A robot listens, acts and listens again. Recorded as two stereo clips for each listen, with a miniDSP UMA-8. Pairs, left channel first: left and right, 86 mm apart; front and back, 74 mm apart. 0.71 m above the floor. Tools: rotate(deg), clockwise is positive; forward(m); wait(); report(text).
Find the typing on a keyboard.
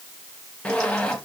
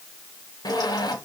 wait()
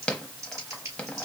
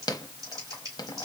rotate(145)
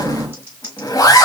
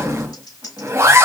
rotate(25)
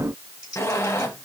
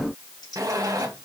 rotate(10)
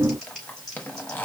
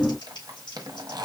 report("Found it: typing on a keyboard, straight ahead, 2 to 4 m away.")